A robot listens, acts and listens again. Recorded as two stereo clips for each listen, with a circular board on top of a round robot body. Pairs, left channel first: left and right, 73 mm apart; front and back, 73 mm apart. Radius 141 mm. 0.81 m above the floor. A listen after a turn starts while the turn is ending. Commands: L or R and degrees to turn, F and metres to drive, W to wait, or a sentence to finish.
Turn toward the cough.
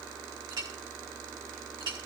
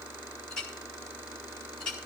W
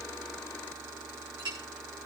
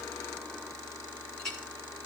W
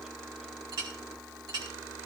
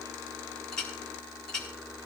I can't make out a cough to turn to.